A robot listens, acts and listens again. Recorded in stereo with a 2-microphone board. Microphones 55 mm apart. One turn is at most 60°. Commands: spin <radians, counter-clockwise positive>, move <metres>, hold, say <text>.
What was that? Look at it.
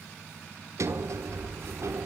spin -1.05
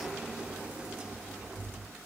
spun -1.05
spin -0.35
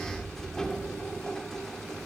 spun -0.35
spin 0.17
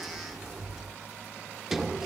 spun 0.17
say Found it: a sliding door, straight ahead, 1 to 2 m away.